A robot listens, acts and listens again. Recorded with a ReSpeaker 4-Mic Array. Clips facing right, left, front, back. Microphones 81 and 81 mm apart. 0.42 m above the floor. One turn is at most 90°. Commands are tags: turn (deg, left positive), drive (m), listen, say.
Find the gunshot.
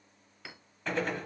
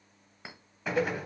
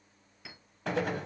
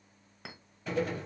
<turn deg="10"/>
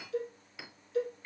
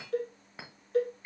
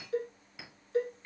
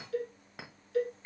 <say>I heard a gunshot from this way, but can't make it out now.</say>